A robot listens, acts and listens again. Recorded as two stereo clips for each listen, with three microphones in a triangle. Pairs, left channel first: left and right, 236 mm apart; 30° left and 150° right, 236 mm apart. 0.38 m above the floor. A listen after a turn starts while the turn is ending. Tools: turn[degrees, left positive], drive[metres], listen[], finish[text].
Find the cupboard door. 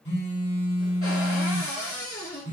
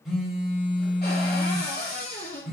Thought: The cupboard door: 75° left.
Action: turn[75]
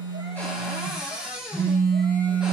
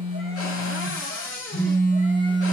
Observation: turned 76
Action: finish[Found it: a cupboard door, straight ahead, 1 to 2 m away.]